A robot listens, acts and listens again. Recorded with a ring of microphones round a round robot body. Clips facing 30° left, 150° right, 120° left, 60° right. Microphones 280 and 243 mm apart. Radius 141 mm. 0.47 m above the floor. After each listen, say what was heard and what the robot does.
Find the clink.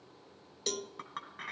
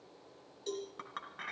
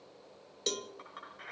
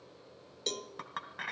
The clink: 55° right. Turn 55° right.
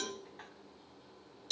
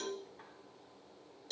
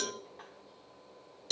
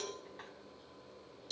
Found it: a clink, straight ahead.